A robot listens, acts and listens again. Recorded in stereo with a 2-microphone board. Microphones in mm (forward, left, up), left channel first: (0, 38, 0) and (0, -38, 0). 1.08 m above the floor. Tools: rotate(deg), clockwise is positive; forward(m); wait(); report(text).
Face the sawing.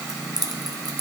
wait()
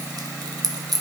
wait()
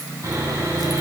rotate(45)
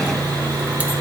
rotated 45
rotate(90)
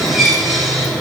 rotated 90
report("Facing the sawing.")